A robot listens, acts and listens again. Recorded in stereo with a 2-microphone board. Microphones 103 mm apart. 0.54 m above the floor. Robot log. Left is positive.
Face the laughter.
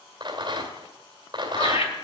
note: The laughter: about 70° left or 110° left.
cmd yaw +70
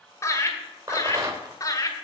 note: So it is at 35° left.
cmd yaw +35
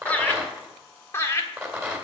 note: The laughter is now 30° left.
cmd yaw +30
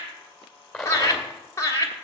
note: The laughter is now 30° left.
cmd yaw +30
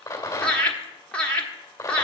note: The laughter is now 10° left.
cmd yaw +10
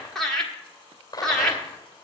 end: Found it: laughter, straight ahead, 1 to 2 m away.